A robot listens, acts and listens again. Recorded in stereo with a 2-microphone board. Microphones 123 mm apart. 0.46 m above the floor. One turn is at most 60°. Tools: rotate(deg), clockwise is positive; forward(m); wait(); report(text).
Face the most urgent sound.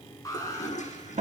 rotate(-30)
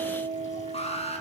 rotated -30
rotate(-60)
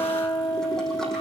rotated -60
rotate(-60)
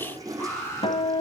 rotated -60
rotate(-20)
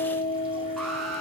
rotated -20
report("Facing the alarm, over 4 m away.")